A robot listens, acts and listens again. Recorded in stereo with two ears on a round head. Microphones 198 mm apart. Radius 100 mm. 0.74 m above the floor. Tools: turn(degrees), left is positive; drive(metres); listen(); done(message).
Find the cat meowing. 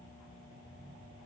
listen()
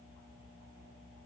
listen()
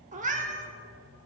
turn(degrees=-35)
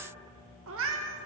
turn(degrees=-110)
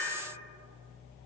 turn(degrees=10)
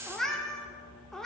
done("Found it: a cat meowing, straight ahead.")